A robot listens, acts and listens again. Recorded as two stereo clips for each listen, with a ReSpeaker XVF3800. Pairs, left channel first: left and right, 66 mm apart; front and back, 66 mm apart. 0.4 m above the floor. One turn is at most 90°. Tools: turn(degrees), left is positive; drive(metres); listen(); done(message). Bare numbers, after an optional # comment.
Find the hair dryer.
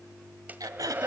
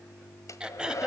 # The hair dryer: 30° right.
turn(-30)
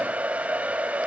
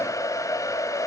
# The hair dryer is now 25° right.
turn(-25)
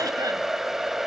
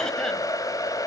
done("Facing the hair dryer.")